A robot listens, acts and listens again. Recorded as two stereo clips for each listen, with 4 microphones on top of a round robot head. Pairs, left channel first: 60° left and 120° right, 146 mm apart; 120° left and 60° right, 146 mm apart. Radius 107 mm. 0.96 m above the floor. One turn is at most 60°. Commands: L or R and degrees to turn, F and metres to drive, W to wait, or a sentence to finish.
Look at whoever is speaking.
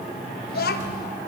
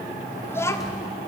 L50
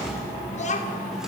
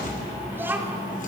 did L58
L20
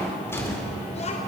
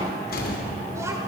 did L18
W
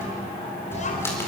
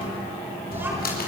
L20
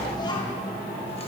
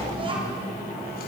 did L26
Facing the child speaking, 2 to 4 m away.